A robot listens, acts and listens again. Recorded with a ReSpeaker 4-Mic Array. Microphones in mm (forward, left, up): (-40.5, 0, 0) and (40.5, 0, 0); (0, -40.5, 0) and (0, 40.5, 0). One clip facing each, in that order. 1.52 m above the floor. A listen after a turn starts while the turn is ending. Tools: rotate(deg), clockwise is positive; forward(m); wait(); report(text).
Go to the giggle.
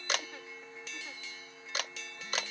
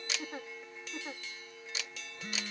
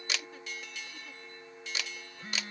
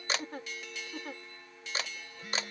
rotate(-60)
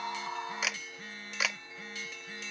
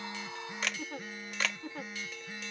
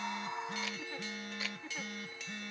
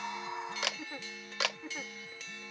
rotate(-10)
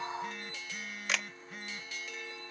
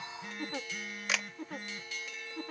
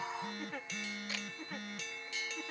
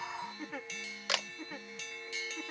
forward(1.0)
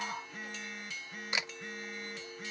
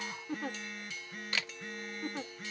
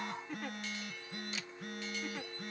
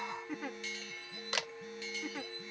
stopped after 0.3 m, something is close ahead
report("Blocked. The giggle is further on, straight ahead.")